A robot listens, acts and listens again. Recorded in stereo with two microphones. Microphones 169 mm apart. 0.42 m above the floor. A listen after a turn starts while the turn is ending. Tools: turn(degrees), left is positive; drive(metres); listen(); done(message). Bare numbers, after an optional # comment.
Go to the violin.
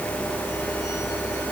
listen()
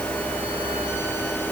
listen()
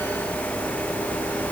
done("I can't make out a violin.")